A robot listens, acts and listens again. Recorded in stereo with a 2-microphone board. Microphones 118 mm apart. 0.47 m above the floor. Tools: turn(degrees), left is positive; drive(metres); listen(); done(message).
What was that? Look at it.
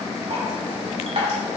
turn(degrees=-65)
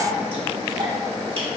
turn(degrees=-50)
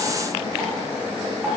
turn(degrees=-20)
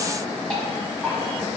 done("Facing the dripping, 1 to 2 m away.")